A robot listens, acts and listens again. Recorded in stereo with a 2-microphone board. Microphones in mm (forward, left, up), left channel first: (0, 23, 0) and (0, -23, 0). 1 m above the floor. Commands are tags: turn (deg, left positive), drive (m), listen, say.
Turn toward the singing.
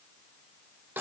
<listen/>
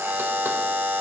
<listen/>
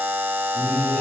<turn deg="90"/>
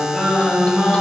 <say>Found it: singing, straight ahead.</say>